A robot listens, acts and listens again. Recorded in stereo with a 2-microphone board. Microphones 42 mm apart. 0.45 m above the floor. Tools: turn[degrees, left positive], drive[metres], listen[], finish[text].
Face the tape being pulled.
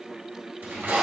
Thought: The tape being pulled: about 65° right or 115° right.
Action: turn[-65]
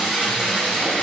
Thought: So it is at 25° right.
Action: turn[-25]
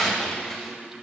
Action: finish[Found it: tape being pulled, straight ahead, 1 to 2 m away.]